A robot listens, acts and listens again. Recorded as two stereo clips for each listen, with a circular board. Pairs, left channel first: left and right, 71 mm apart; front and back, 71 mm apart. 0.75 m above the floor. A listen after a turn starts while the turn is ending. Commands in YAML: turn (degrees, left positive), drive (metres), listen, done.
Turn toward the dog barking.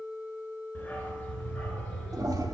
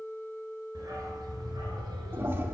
turn: 170
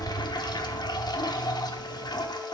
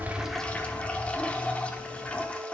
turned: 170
turn: 20
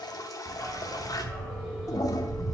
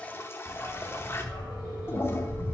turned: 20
done: "Facing the dog barking."